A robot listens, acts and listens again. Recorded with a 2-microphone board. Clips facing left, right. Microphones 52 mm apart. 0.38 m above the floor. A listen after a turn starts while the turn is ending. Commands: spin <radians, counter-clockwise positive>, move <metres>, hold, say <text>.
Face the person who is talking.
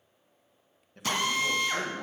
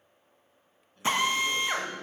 spin 1.13
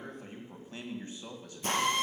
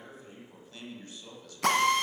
spin 0.52
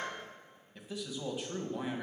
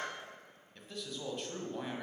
say Facing the man speaking.